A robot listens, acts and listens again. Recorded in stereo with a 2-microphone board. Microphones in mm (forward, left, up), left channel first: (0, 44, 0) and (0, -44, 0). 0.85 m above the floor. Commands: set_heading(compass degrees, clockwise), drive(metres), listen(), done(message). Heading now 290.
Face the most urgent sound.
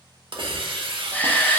set_heading(270)
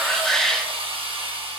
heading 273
done("Found it: a shout, straight ahead.")